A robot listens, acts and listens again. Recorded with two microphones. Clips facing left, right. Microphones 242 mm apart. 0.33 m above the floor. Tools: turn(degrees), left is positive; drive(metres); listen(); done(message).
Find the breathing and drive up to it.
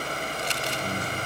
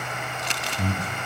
turn(degrees=-45)
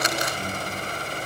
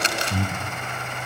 turn(degrees=-85)
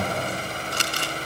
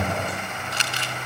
drive(metres=1.0)
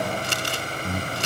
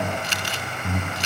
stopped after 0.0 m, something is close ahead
done("Something is in my way. I am facing the breathing but have not reached it.")